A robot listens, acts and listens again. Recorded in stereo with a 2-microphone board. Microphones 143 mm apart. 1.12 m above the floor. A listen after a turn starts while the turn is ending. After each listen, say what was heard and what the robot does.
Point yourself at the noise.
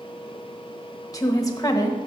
The woman speaking: about 25° left or 155° left. Turn 25° left.
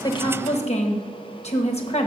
So it is at 130° left. Turn 130° left.
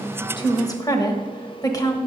The woman speaking is now 25° left. Turn 25° left.
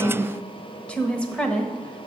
The woman speaking is now 10° left. Turn 10° left.
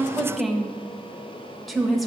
Facing the woman speaking.